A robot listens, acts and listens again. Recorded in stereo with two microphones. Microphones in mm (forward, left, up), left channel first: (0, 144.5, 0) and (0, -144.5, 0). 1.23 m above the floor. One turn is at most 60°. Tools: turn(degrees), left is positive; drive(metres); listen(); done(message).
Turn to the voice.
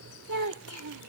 turn(degrees=-60)
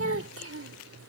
turn(degrees=-50)
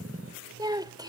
turn(degrees=-15)
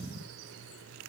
listen()
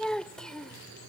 done("Found it: a child speaking, straight ahead.")